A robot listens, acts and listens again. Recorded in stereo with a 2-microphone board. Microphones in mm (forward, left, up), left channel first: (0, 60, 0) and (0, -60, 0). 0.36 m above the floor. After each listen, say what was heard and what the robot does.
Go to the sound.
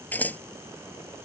Turn 30° left.
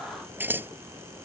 So it is at 15° right. Turn 15° right.
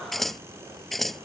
Drive 1.0 m forward.
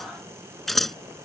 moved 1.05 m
Drive 1.0 m forward.
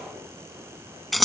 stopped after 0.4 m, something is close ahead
Arrived at the scissors, straight ahead.